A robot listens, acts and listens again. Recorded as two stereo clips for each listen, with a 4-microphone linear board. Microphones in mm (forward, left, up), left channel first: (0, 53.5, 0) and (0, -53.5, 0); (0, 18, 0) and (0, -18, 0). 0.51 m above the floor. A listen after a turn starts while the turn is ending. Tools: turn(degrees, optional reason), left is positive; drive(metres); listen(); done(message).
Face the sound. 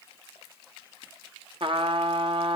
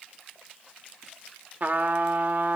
turn(degrees=-55, reason="The trumpet: about 55° right or 125° right.")
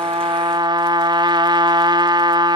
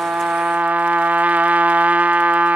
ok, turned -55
turn(degrees=-55, reason="So it is at 55° right.")
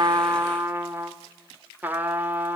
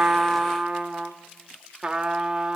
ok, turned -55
turn(degrees=-20, reason="The trumpet is now 20° right.")
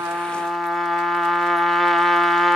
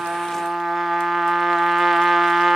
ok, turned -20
done("Facing the trumpet, 1 to 2 m away.")